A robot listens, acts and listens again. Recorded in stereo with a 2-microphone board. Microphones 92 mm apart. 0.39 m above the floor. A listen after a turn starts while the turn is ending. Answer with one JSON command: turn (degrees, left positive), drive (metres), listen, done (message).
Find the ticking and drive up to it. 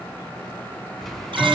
{"turn": 30}
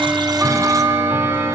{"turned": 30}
{"turn": -25}
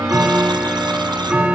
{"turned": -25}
{"turn": -10}
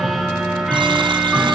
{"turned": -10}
{"drive": 1.0}
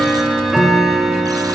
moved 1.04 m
{"drive": 1.0}
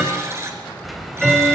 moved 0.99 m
{"drive": 1.0}
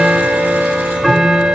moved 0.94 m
{"drive": 1.0}
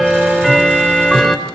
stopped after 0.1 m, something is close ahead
{"done": "Arrived at the ticking, straight ahead."}